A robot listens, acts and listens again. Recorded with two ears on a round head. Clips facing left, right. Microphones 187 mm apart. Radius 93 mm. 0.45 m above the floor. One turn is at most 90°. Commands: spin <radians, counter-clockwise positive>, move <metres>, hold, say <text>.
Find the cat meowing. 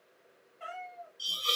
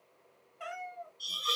spin -1.05
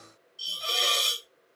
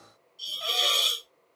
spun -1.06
hold
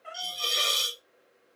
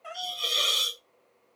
spin -1.05
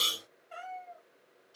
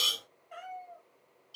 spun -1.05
say Facing the cat meowing.